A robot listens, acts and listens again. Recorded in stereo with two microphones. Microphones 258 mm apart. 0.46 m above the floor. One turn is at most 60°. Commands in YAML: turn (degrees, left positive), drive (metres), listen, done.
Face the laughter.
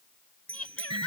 turn: 60
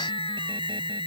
listen: true
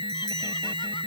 listen: true
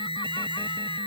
done: "I heard laughter, but can't make it out now. It was about 10° left or 50° left."